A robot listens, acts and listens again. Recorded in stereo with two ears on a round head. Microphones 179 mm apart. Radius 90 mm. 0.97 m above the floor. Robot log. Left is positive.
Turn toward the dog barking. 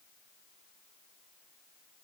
cmd idle
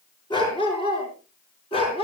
note: The dog barking: about 30° left or 150° left.
cmd yaw +30
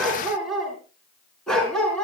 end: Found it: a dog barking, straight ahead, over 4 m away.